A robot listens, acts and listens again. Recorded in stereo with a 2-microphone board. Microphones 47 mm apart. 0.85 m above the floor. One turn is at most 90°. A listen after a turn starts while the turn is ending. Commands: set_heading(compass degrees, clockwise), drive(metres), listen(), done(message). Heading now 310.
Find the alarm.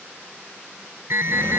set_heading(10)
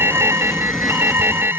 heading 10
set_heading(65)
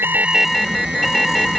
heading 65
done("Found it: an alarm, straight ahead.")